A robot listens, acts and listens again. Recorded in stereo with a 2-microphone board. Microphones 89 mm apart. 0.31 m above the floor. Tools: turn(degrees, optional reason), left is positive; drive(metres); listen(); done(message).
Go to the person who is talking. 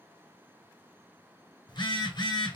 listen()
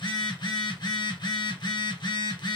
listen()
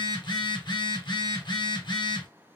done("I can't make out anyone speaking to turn to.")